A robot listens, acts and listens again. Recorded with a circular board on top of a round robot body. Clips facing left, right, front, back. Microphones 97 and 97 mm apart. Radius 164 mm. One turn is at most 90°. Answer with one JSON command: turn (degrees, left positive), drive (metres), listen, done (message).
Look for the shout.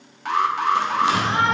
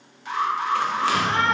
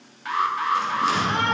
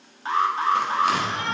{"turn": 20}
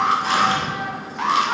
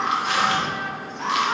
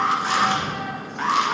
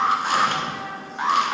{"done": "Found it: a shout, straight ahead, 1 to 2 m away."}